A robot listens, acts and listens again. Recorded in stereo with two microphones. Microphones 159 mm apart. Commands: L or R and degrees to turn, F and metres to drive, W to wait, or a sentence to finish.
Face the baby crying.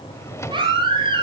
R30
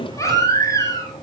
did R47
L20
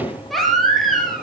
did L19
Facing the baby crying, over 4 m away.